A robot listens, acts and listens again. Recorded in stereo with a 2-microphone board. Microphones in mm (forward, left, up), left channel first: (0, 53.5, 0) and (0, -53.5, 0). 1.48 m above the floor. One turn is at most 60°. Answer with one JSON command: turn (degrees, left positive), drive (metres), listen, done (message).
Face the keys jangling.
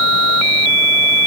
{"listen": true}
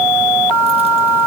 {"listen": true}
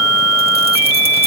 {"done": "I can't make out keys jangling."}